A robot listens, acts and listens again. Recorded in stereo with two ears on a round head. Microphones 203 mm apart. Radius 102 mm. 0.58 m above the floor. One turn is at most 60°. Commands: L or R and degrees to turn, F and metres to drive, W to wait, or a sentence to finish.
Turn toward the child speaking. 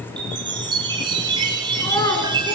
L30
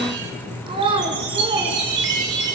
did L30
R25
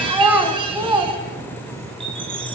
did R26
R15
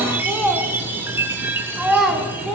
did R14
Facing the child speaking, 2 to 4 m away.